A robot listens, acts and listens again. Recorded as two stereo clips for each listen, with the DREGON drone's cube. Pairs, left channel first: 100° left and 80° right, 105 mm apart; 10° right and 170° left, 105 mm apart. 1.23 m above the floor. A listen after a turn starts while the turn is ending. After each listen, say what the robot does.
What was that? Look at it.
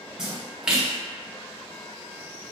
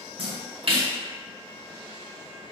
Turn 160° right.
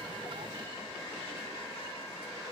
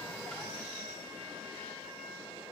I heard a splash from this way, but can't make it out now.